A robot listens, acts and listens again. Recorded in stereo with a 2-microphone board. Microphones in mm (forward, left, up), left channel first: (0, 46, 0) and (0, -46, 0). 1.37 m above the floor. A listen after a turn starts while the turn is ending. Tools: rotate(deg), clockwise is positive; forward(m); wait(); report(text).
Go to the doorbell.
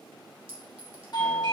rotate(-55)
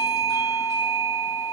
rotate(-65)
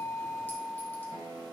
forward(1.0)
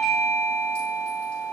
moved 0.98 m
forward(1.0)
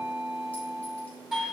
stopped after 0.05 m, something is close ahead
report("I am next to the doorbell.")